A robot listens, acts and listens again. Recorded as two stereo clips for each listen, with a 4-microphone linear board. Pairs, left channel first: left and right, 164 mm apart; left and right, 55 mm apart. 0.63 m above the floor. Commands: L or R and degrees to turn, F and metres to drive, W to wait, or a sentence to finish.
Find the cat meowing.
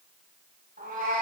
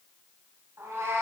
R55
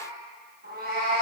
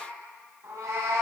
R75
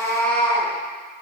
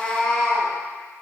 L10
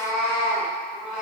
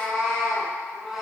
Found it: a cat meowing, straight ahead.